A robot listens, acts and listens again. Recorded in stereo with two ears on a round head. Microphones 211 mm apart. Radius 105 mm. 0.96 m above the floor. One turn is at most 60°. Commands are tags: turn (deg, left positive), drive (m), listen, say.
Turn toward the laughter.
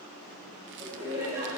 <turn deg="-30"/>
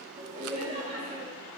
<turn deg="-60"/>
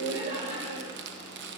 <turn deg="-60"/>
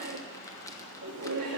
<turn deg="-60"/>
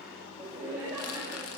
<turn deg="-10"/>
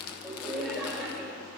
<say>Found it: laughter, straight ahead, 2 to 4 m away.</say>